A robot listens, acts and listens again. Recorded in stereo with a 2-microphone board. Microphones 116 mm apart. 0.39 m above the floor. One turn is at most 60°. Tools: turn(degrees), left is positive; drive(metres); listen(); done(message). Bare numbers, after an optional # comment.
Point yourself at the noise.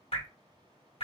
# The dripping: about 60° left or 120° left.
turn(60)
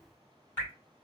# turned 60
# So it is at 20° left.
turn(20)
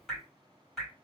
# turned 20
done("Found it: dripping, straight ahead.")